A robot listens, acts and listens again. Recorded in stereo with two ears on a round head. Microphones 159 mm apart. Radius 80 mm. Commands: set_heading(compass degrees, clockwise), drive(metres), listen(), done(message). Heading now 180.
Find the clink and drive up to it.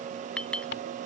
set_heading(150)
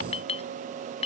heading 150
set_heading(5)
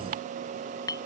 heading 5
set_heading(345)
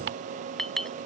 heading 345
drive(1.0)
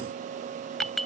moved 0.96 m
drive(1.0)
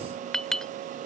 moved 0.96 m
drive(1.0)
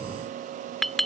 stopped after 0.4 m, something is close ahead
done("Arrived at the clink, straight ahead.")